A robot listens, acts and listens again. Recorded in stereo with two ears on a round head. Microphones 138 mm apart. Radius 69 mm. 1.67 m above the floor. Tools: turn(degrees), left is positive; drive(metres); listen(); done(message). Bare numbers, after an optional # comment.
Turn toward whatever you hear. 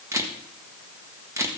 # The camera shutter: about 20° right or 160° right.
turn(-20)
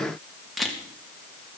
done("Facing the camera shutter, 1 to 2 m away.")